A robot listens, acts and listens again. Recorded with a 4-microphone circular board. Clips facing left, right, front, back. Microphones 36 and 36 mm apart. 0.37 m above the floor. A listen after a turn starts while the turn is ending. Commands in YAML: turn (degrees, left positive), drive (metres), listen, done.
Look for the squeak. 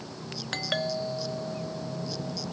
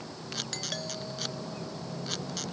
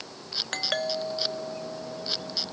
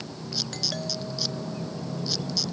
listen: true
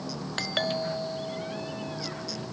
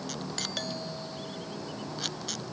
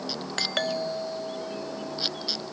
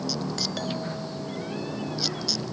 listen: true
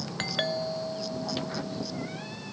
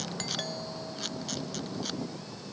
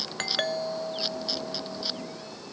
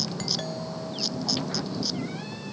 done: "I can't make out a squeak to turn to."